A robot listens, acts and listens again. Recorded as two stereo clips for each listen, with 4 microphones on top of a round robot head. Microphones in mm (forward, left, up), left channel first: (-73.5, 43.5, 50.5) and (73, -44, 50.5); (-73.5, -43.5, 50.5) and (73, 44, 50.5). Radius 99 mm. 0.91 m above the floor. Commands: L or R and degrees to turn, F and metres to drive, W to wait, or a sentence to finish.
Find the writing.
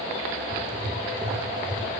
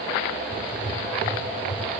R55
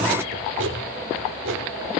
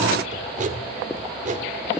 R20
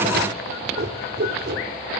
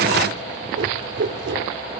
Facing the writing, 2 to 4 m away.